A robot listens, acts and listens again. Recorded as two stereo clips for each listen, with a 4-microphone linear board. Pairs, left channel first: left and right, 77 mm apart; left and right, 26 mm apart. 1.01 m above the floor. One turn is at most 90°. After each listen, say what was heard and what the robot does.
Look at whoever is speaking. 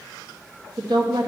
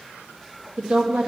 The woman speaking: about 70° right or 110° right. Turn 70° right.
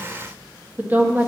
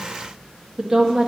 So it is at 25° right. Turn 25° right.
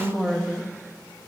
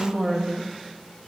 Found it: a woman speaking, straight ahead.